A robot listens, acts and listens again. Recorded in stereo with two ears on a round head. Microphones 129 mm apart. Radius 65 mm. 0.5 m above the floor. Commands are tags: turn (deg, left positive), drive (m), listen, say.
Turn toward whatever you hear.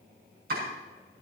<turn deg="-70"/>
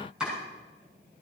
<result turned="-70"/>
<say>Facing the chopping, over 4 m away.</say>